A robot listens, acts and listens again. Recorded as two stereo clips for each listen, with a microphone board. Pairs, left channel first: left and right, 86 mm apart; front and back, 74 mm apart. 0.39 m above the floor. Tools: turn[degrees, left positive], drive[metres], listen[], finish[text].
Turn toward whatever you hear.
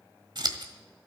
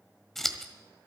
Thought: The scissors: 85° right.
Action: turn[-85]
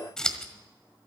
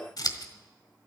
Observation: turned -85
Thought: The scissors is now 10° left.
Action: turn[10]
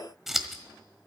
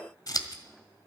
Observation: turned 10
Action: finish[Found it: scissors, straight ahead, 1 to 2 m away.]